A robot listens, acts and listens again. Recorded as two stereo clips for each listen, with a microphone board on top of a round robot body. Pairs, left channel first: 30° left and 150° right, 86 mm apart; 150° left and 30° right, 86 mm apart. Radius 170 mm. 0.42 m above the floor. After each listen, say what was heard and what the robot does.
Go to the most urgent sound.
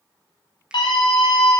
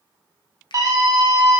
The scream: 15° left. Turn 15° left.
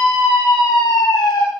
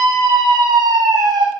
Drive 1.0 m forward.
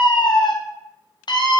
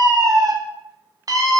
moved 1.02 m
The scream is now 10° left. Turn 10° left.
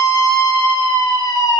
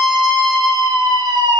Drive 1.0 m forward.
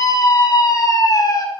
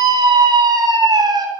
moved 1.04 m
Drive 1.0 m forward.
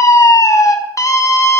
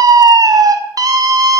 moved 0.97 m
Drive 1.0 m forward.
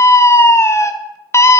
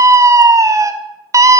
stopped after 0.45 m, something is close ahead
The scream is now 10° right. Turn 10° right.
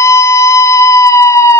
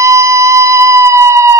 Arrived at the scream, straight ahead.